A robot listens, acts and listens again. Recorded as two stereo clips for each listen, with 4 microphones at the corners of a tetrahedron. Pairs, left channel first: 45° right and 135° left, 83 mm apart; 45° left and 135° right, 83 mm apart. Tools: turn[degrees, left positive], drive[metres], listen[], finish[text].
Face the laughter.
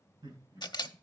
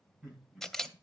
Thought: The laughter: 145° left.
Action: turn[145]
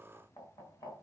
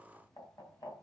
Thought: The laughter is now 10° right.
Action: turn[-10]
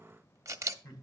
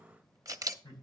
Action: finish[Facing the laughter, over 4 m away.]